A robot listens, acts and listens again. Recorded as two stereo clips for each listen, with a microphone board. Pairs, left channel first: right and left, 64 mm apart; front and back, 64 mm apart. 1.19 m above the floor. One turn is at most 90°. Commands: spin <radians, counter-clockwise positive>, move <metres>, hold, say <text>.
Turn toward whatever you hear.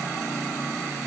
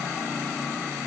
hold
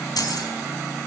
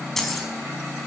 spin -1.48
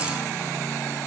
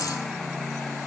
hold
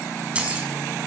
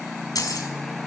spin 0.26
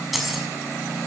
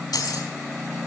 say Facing the keys jangling, over 4 m away.